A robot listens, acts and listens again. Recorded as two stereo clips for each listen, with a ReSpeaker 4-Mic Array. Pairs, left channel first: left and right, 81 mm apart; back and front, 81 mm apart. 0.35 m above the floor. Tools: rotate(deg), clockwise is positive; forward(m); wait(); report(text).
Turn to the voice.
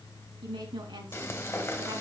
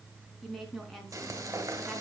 rotate(90)
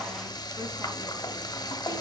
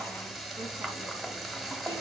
wait()
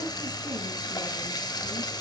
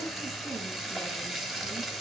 wait()
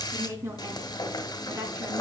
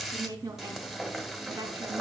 rotate(40)
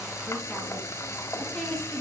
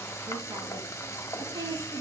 report("Facing the woman speaking.")